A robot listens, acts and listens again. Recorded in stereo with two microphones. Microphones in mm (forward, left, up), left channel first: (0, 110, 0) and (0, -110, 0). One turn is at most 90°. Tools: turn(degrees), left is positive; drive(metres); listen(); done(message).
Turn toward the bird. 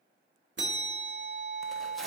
listen()
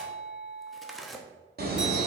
turn(degrees=-45)
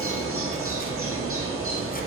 turn(degrees=-90)
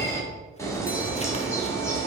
turn(degrees=15)
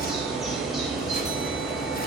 done("Facing the bird, 1 to 2 m away.")